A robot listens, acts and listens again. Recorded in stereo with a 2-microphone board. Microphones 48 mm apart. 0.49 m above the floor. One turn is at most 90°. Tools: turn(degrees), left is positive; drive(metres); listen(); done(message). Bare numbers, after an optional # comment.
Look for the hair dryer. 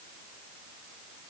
listen()
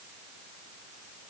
listen()
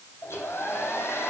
# The hair dryer: about 70° left or 110° left.
turn(70)
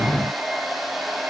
done("Facing the hair dryer, 2 to 4 m away.")